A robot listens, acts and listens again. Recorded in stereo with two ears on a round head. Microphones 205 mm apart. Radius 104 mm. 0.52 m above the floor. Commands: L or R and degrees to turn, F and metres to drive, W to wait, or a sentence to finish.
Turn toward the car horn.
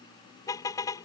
L30
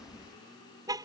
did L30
R15
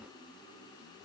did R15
W
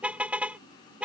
Facing the car horn.